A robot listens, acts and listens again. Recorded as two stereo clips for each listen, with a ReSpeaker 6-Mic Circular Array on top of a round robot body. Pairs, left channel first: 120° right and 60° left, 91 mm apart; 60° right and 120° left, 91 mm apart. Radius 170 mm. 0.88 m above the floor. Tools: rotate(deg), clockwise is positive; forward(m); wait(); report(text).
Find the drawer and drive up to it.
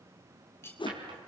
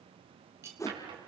rotate(-90)
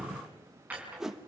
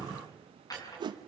rotate(15)
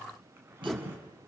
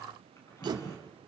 forward(1.0)
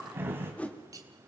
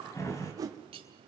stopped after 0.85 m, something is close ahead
report("Something is in my way. I am facing the drawer but have not reached it.")